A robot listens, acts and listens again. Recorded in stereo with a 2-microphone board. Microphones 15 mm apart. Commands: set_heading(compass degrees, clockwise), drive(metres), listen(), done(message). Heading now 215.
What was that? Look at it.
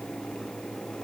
listen()
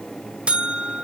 set_heading(305)
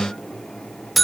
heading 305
done("Facing the buzzer, under 1 m away.")